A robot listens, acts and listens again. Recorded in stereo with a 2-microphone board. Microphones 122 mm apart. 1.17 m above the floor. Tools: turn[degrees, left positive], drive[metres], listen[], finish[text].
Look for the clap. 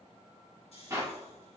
Thought: The clap: about 25° right or 155° right.
Action: turn[-25]
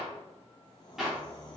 Action: finish[Facing the clap.]